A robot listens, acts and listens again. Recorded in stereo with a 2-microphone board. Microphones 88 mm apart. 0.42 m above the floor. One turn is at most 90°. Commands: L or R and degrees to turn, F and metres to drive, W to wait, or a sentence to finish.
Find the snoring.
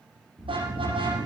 L55
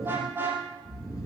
L55
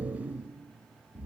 R20
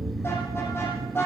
Found it: snoring, straight ahead.